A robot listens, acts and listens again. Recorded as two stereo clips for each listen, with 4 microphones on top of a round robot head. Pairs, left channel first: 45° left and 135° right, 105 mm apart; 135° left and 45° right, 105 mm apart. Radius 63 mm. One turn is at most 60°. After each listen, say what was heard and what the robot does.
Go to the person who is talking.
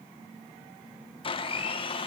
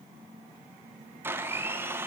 Keep listening.
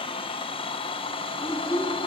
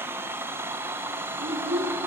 The child speaking: 15° right. Turn 15° right.
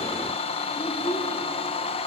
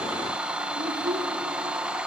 Drive 1.0 m forward.
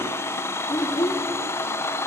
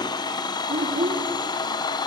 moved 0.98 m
Drive 1.0 m forward.
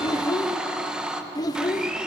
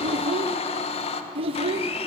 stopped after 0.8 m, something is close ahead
The child speaking is now 10° right. Turn 10° right.
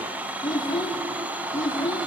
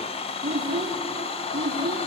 I am next to the child speaking.